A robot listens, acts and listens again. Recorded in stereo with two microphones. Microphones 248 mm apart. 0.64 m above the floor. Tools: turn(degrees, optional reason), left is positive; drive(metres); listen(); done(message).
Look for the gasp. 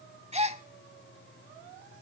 turn(degrees=-25, reason="The gasp: about 25° right or 155° right.")
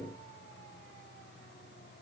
listen()
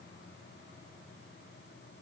done("I heard a gasp, but can't make it out now. It was about straight ahead or 130° right.")